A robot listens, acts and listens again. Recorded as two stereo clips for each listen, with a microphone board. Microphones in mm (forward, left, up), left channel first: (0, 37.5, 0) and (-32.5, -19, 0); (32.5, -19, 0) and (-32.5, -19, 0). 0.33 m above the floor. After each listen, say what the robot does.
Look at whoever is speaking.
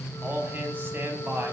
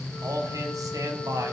Turn 170° right.
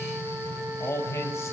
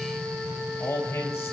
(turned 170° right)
Turn 30° left.
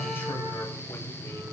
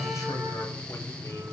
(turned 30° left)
Keep listening.
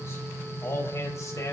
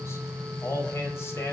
Turn 35° left.
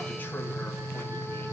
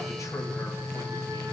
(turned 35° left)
Keep listening.
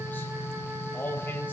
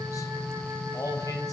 Found it: a man speaking, straight ahead.